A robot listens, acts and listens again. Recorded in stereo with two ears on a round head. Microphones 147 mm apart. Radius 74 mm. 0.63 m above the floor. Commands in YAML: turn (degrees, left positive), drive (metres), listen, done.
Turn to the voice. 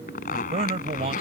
turn: -40
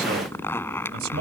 turn: -95
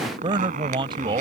turn: -30
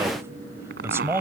turn: -15
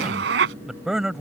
done: "Found it: a man speaking, straight ahead."